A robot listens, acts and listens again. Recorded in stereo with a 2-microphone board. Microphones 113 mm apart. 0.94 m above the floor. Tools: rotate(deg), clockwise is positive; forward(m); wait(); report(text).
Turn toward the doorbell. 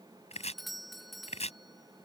rotate(-30)
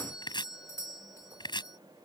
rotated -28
rotate(-150)
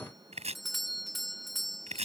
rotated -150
report("Facing the doorbell.")